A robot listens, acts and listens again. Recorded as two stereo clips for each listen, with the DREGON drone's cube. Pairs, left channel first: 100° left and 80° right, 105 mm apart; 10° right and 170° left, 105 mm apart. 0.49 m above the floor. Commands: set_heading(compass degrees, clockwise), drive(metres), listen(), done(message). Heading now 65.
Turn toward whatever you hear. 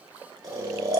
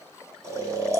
set_heading(195)
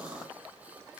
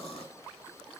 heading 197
listen()
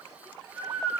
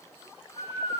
done("Facing the snoring.")